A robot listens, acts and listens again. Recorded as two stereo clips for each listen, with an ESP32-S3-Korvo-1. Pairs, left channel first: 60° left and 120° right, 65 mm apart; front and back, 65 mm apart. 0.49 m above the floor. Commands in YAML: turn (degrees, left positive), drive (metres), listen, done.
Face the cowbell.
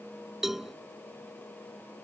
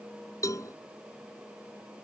turn: -35
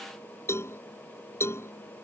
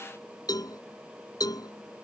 turn: 15
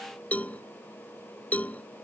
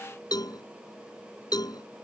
done: "Found it: a cowbell, straight ahead."